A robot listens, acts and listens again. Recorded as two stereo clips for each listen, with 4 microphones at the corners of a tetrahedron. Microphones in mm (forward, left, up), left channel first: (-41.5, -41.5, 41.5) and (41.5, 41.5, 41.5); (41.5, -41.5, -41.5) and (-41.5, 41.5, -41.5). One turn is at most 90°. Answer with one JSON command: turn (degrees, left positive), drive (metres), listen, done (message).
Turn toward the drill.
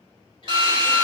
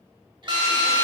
{"turn": 90}
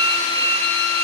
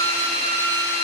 {"turn": 25}
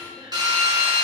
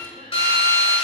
{"done": "Facing the drill."}